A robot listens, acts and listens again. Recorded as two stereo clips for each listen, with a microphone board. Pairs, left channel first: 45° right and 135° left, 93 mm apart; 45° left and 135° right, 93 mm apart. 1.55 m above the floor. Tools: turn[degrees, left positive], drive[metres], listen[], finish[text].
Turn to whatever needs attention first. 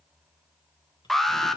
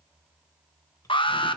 Thought: The alarm: 40° left.
Action: turn[40]
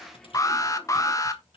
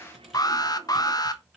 Action: finish[Found it: an alarm, straight ahead.]